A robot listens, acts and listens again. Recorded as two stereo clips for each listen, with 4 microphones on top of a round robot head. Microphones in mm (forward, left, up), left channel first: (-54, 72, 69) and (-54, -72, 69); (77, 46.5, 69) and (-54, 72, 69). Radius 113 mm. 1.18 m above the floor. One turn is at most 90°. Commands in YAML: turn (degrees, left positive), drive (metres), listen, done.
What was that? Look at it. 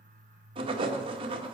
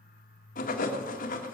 turn: -30
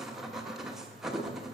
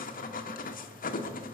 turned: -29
done: "Found it: writing, straight ahead, 1 to 2 m away."